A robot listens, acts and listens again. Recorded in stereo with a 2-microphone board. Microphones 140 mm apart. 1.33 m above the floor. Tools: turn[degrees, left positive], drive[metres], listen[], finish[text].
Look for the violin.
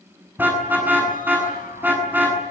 Action: listen[]
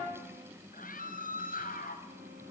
Action: listen[]
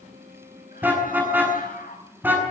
Action: finish[I can't make out a violin to turn to.]